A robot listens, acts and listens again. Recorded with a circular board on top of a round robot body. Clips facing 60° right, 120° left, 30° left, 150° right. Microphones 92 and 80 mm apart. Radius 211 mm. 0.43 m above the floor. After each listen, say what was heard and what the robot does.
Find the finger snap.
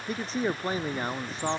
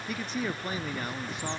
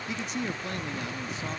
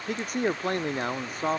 Keep listening.
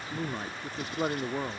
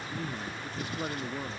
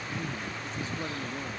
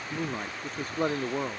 Keep listening.
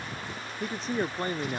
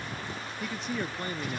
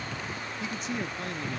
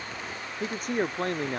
I can't make out a finger snap to turn to.